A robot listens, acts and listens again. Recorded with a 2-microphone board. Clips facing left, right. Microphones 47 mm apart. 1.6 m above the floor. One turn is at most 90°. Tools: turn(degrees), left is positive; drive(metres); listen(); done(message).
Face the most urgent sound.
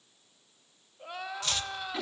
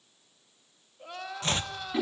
turn(degrees=30)
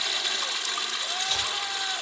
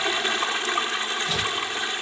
listen()
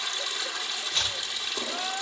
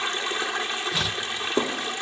listen()
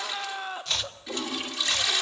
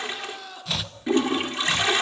turn(degrees=90)
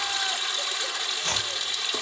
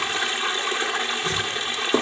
turn(degrees=50)
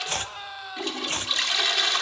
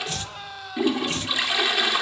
done("Facing the crying.")